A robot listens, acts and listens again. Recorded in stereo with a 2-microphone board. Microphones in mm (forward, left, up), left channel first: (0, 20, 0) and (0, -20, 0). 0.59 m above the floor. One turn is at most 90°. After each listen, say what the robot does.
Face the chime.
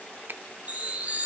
Turn 35° right.
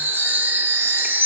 Turn 90° right.
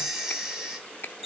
Turn 10° right.
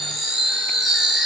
Found it: a chime, straight ahead.